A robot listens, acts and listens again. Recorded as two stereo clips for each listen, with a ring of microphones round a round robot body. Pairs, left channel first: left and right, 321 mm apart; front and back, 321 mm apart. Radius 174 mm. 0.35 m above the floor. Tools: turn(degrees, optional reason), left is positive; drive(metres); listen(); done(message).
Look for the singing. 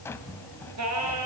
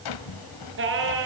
turn(degrees=-130, reason="The singing: 130° right.")
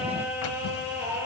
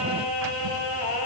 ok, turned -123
done("Found it: singing, straight ahead.")